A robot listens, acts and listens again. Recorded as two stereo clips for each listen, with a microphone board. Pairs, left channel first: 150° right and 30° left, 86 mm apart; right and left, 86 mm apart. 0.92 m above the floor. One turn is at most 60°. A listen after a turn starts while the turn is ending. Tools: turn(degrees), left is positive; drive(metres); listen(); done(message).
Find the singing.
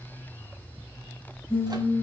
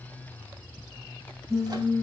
turn(degrees=60)
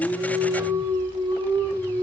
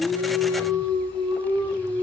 turn(degrees=60)
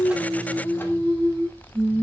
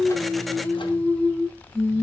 turn(degrees=10)
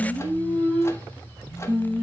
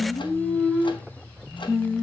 turn(degrees=10)
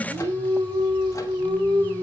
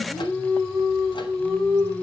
done("Facing the singing, 2 to 4 m away.")